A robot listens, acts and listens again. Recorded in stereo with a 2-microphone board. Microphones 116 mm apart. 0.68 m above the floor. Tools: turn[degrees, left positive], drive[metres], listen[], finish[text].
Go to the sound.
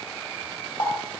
Thought: The running tap: about 40° left or 140° left.
Action: turn[40]
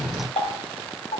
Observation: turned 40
Thought: So it is at 95° left.
Action: turn[95]
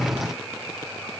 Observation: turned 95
Action: listen[]
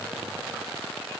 Action: listen[]
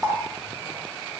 Action: drive[1.0]
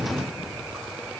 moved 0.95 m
Action: listen[]
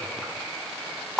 Action: drive[1.0]
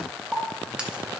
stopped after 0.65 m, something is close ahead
Thought: The running tap is now 10° right.
Action: turn[-10]
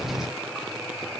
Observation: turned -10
Action: listen[]
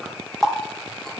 Action: finish[I am next to the running tap.]